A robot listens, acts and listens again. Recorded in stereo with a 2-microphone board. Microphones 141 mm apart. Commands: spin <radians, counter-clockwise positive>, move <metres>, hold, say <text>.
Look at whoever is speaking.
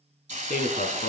spin 1.22
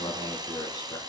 spin 0.52
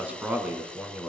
spin -0.17
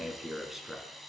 say Facing the man speaking.